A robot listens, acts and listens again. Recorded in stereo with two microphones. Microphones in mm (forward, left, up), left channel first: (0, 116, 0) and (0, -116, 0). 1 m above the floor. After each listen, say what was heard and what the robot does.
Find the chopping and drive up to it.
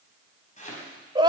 The chopping: about 35° left or 145° left. Turn 35° left.
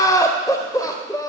Keep listening.
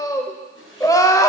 So it is at 110° left. Turn 110° left.
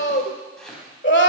Drive 1.0 m forward.
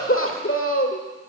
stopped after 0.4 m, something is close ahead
Keep listening.
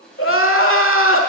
Blocked. The chopping is further on, straight ahead.